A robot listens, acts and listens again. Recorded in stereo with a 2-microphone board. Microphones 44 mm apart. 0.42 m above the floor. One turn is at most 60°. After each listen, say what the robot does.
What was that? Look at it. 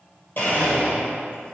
Turn 50° left.
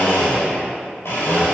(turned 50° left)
Turn 60° left.
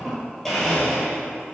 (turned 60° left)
Facing the blender, 1 to 2 m away.